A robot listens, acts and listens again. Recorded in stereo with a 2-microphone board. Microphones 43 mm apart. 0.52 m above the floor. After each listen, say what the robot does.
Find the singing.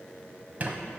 Keep listening.
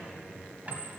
Keep listening.
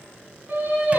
Turn 45° right.
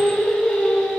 Turn 20° left.
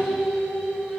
Facing the singing.